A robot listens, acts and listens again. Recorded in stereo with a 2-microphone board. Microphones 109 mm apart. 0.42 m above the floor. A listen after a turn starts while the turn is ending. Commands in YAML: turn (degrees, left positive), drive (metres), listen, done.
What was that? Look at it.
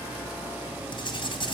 turn: 50
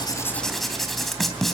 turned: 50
done: "Facing the writing."